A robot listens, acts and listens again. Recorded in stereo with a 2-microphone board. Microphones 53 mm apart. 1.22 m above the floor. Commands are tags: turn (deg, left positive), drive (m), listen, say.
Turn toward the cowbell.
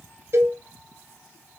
<turn deg="-60"/>
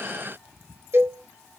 <turn deg="-50"/>
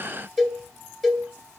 <say>Facing the cowbell.</say>